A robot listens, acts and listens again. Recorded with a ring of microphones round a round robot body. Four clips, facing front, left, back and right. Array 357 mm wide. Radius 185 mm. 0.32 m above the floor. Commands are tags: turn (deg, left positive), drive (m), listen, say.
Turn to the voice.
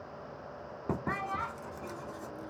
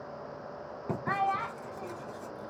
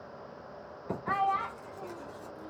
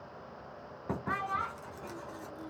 <turn deg="140"/>
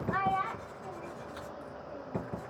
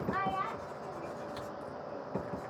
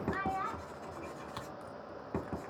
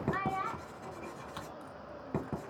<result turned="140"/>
<say>Facing the child speaking, 1 to 2 m away.</say>